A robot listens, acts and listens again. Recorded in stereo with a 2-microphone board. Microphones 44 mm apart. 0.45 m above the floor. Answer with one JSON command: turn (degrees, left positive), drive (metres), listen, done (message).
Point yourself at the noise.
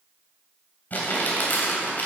{"turn": 45}
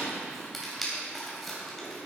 {"turn": 10}
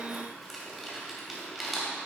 {"done": "Facing the crumpling, 2 to 4 m away."}